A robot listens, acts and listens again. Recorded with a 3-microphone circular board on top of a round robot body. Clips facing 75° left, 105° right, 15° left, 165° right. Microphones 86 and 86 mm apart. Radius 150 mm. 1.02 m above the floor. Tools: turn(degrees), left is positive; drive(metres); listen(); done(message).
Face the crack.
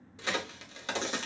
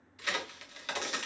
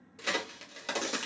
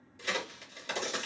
turn(degrees=15)
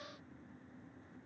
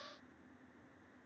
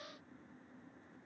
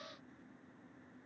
done("Facing where the crack came from. I can't hear it now.")